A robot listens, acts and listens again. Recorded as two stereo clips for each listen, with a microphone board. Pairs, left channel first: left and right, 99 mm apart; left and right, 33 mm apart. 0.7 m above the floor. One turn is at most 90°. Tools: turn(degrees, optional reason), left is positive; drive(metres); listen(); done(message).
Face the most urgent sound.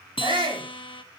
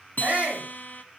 turn(degrees=-55, reason="The shout: about 55° right or 125° right.")
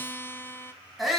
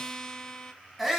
done("Facing the shout, over 4 m away.")